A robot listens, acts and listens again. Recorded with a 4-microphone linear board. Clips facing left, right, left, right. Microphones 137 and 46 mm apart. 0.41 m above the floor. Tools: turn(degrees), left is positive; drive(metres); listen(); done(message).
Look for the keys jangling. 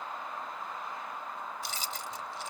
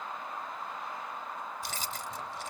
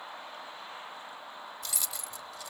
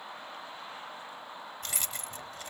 turn(degrees=-50)
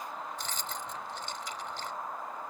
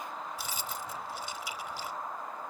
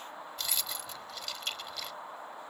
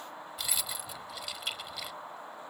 turn(degrees=-10)
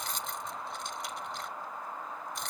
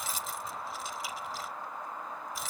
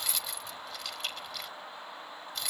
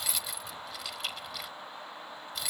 done("Facing the keys jangling.")